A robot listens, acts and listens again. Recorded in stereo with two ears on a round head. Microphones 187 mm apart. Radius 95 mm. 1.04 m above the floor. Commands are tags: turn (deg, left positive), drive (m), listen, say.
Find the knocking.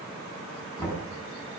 <turn deg="30"/>
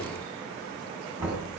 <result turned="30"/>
<turn deg="-10"/>
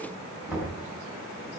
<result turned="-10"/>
<say>Facing the knocking, over 4 m away.</say>